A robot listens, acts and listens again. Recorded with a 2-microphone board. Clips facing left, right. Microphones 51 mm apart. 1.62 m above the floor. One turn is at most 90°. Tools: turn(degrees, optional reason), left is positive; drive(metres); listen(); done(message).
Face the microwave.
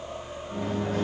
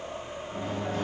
turn(degrees=60, reason="The microwave: about 60° left or 120° left.")
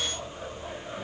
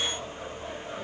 listen()
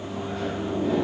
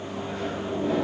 done("Facing the microwave.")